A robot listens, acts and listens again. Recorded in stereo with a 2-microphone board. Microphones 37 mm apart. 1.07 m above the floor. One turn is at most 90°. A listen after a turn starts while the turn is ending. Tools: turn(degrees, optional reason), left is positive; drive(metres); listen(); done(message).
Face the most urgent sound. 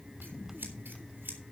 listen()
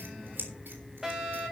turn(degrees=-15, reason="The fire alarm: about 15° right or 165° right.")
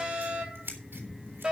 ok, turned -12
turn(degrees=-90, reason="So it is at 150° right.")
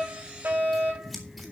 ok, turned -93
turn(degrees=-55, reason="The fire alarm is now 55° right.")
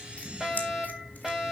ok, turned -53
done("Facing the fire alarm, over 4 m away.")